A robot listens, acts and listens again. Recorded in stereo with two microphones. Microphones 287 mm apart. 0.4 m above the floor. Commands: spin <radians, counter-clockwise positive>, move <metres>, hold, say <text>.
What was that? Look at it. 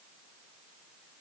hold
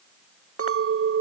spin -0.87
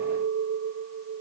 spin -1.22
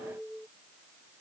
say Facing the clink.